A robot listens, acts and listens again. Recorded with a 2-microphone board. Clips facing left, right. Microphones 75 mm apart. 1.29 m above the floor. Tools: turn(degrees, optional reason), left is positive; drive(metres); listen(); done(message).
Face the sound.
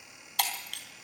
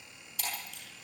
turn(degrees=65, reason="The breaking glass: about 65° left or 115° left.")
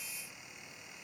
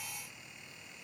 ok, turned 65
listen()
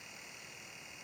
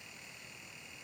done("I heard breaking glass, but can't make it out now. It was about straight ahead or 50° left.")